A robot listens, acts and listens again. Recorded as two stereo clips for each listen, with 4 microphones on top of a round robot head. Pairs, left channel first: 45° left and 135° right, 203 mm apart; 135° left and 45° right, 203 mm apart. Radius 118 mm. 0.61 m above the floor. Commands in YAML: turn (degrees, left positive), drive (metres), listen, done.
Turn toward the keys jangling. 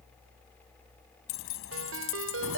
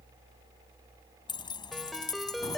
turn: 60
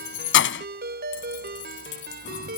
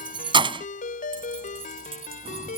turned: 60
turn: 15
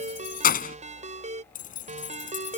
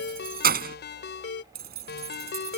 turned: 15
done: "Facing the keys jangling."